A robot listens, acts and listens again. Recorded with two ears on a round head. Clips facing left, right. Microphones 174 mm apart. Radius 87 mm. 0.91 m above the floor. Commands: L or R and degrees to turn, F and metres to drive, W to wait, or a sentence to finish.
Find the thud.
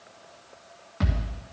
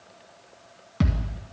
R45
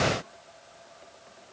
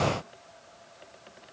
W
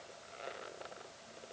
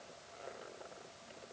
I heard a thud, but can't make it out now. It was about straight ahead or 90° right.